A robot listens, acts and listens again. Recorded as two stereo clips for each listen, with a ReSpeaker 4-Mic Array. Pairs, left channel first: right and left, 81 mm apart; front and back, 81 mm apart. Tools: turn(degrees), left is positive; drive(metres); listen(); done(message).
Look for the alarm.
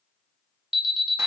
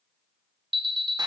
turn(degrees=175)
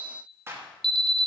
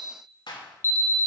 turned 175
turn(degrees=65)
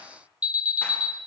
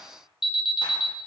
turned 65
turn(degrees=15)
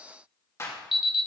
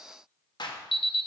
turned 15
done("Found it: an alarm, straight ahead, 1 to 2 m away.")